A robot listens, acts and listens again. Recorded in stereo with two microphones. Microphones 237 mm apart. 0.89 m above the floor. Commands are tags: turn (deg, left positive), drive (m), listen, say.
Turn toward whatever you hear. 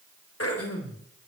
<turn deg="90"/>
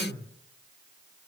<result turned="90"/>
<turn deg="15"/>
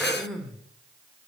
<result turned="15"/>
<say>Found it: throat clearing, straight ahead.</say>